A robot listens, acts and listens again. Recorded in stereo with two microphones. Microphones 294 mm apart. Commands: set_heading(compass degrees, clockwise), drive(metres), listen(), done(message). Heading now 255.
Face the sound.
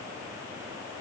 listen()
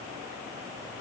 listen()
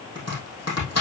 set_heading(195)
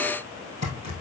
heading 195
set_heading(130)
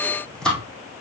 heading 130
done("Found it: chopping, straight ahead.")